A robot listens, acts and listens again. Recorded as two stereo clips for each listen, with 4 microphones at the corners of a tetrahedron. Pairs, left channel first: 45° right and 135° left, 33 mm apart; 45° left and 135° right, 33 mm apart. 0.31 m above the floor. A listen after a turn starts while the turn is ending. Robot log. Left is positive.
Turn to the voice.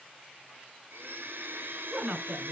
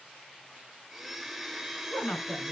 note: The woman speaking: 75° left.
cmd yaw +75
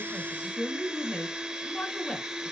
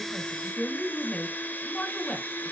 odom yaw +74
end: Facing the woman speaking, 2 to 4 m away.